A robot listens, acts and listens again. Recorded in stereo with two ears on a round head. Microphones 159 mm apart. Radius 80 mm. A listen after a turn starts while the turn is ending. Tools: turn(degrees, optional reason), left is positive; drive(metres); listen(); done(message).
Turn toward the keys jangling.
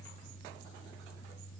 listen()
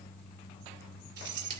turn(degrees=-70, reason="The keys jangling: about 70° right or 110° right.")
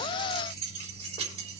turn(degrees=-35, reason="So it is at 35° right.")
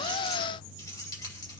listen()
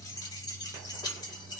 turn(degrees=25, reason="The keys jangling is now 25° left.")
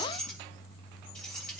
done("Facing the keys jangling, over 4 m away.")